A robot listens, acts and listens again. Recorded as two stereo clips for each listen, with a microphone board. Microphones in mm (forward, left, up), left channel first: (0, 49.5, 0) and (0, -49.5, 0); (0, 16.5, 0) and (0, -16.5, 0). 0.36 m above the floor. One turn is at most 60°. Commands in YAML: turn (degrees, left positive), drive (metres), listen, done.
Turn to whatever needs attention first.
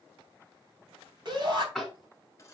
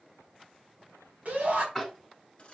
turn: -50
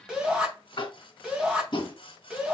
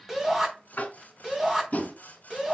turn: -10
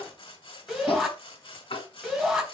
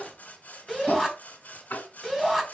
done: "Found it: a shout, straight ahead."